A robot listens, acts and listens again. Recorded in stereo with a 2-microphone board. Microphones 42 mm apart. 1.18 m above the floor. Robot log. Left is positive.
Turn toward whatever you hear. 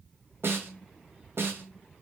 note: The snare drum: about 75° right or 105° right.
cmd yaw -75
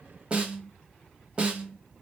note: So it is at 25° right.
cmd yaw -25
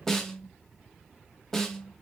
note: The snare drum is now 15° left.
cmd yaw +15
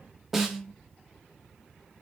end: Facing the snare drum.